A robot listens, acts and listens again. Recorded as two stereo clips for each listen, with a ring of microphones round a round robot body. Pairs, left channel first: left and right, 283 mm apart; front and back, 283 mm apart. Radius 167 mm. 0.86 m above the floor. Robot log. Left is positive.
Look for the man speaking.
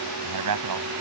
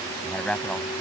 note: The man speaking: 85° right.
cmd yaw -85
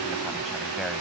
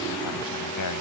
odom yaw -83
end: Facing the man speaking.